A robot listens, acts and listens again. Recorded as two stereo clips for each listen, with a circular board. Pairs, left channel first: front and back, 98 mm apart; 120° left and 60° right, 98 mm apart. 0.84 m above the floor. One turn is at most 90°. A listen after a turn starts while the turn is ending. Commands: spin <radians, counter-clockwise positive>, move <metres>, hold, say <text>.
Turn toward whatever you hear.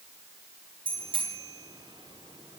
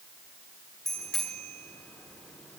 spin -1.57
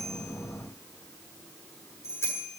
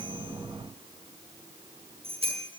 spin -1.05
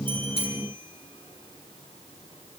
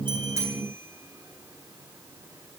hold
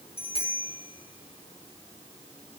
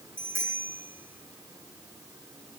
say Found it: a bicycle bell, straight ahead.